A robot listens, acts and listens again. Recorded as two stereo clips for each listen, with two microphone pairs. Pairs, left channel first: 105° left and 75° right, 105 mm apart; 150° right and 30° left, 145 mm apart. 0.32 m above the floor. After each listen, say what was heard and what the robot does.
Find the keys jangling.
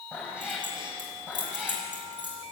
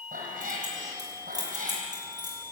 The keys jangling: 30° right. Turn 30° right.
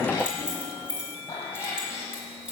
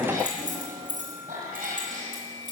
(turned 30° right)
Facing the keys jangling, over 4 m away.